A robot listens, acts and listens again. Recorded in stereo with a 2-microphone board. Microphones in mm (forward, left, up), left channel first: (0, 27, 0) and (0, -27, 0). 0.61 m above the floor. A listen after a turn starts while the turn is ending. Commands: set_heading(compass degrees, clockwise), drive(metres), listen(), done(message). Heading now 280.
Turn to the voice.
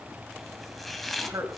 set_heading(350)
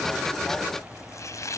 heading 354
listen()
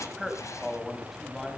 done("Found it: a man speaking, straight ahead.")